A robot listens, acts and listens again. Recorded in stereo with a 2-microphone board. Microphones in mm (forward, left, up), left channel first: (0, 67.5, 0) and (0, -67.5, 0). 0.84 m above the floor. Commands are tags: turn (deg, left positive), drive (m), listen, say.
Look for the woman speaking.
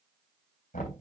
<listen/>
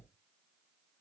<listen/>
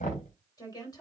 <turn deg="30"/>
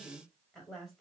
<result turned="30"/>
<say>Found it: a woman speaking, straight ahead, over 4 m away.</say>